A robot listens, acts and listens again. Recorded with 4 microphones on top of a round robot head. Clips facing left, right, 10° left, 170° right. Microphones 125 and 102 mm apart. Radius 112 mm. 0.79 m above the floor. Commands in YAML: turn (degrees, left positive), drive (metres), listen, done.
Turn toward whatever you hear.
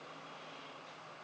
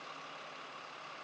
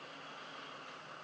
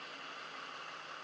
listen: true
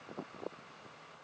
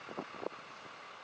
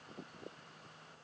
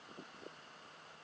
listen: true
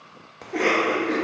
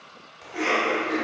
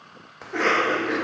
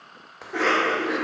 turn: 100
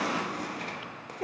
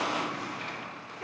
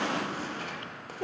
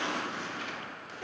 turn: 50
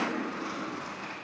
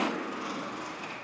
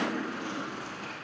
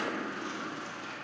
turn: -20
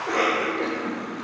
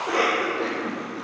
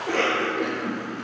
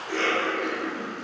done: "Found it: a cough, straight ahead, 1 to 2 m away."